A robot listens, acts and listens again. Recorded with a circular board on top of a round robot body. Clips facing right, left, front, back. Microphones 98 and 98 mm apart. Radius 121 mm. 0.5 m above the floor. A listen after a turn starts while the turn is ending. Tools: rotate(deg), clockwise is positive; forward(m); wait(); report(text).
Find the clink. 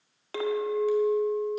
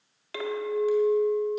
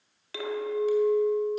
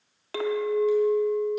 rotate(140)
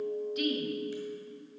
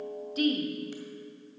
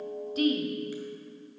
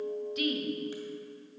rotate(40)
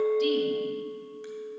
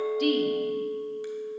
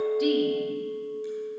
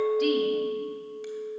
rotate(-15)
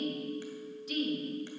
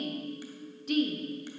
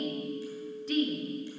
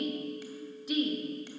rotate(-10)
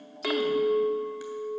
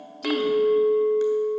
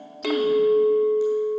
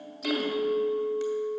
report("Found it: a clink, straight ahead, 1 to 2 m away.")